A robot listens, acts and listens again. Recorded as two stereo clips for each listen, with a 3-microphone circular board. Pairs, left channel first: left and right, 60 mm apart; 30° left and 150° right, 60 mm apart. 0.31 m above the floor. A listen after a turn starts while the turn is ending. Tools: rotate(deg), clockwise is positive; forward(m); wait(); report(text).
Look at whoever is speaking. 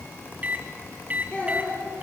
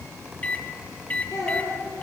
rotate(-25)
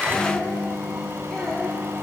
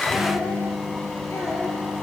wait()
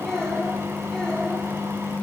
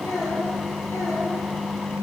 rotate(-10)
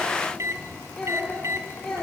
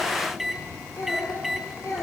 rotate(-15)
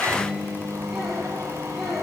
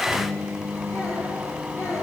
report("Facing the child speaking, over 4 m away.")